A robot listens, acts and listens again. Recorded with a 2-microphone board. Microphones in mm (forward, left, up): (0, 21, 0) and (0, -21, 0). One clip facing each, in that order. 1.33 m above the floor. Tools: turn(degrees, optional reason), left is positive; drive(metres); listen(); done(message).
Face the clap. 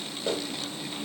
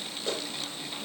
turn(degrees=20, reason="The clap: about 20° left or 160° left.")
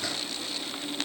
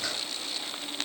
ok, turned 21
listen()
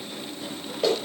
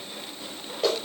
done("Facing the clap, over 4 m away.")